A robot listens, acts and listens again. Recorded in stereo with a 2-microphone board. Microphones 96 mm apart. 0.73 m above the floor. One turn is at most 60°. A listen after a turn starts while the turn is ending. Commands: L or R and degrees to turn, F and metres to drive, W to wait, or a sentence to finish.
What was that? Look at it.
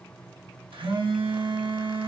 R60
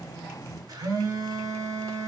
R45
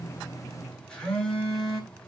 L10
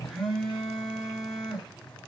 Facing the phone buzzing.